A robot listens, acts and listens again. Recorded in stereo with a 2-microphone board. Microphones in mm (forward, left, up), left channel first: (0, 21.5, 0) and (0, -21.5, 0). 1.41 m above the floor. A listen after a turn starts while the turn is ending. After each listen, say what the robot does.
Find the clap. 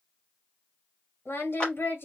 Turn 20° left.
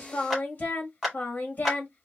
Facing the clap, 2 to 4 m away.